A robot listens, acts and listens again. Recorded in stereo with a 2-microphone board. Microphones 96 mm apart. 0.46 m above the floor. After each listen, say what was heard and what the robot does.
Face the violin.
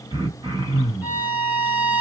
The violin: about 15° right or 165° right. Turn 15° right.
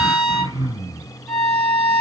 Found it: a violin, straight ahead.